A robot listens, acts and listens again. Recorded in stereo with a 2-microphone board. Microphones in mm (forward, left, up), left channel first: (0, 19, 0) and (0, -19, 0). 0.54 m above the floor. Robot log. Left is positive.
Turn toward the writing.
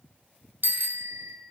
cmd idle
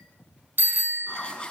note: The writing: about 25° left or 155° left.
cmd yaw +25
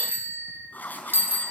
note: So it is at 130° left.
cmd yaw +130
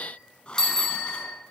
note: The writing is now 30° left.
cmd yaw +30
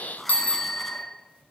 end: Facing the writing.